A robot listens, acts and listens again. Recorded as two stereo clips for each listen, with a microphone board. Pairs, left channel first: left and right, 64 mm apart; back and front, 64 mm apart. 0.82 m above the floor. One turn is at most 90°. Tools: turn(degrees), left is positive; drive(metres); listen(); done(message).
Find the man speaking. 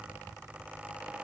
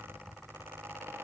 listen()
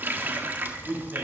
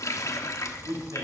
turn(degrees=-30)
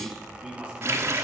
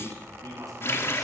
turn(degrees=-15)
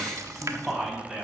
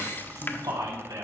done("Facing the man speaking, over 4 m away.")